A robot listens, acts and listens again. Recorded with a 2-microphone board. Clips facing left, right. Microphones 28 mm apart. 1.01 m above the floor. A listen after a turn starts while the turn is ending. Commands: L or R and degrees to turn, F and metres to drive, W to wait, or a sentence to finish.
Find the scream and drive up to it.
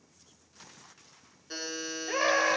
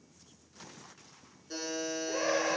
L90
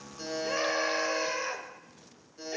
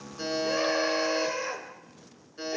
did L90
F1.0
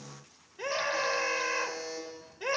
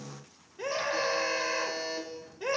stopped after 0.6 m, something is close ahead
L10
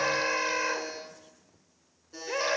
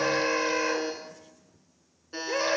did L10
Something is in my way. I am facing the scream but have not reached it.